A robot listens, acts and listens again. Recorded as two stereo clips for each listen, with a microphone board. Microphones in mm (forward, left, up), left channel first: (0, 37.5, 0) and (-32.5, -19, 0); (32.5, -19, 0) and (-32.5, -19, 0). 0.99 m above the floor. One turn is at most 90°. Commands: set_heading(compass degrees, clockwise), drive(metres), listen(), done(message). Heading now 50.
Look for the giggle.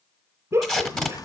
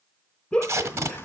set_heading(115)
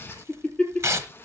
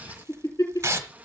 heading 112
done("Found it: a giggle, straight ahead.")